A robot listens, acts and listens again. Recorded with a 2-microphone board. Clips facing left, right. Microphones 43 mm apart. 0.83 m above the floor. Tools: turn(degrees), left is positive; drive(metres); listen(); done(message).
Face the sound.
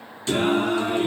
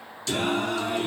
turn(degrees=25)
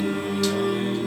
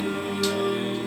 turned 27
done("Facing the singing, under 1 m away.")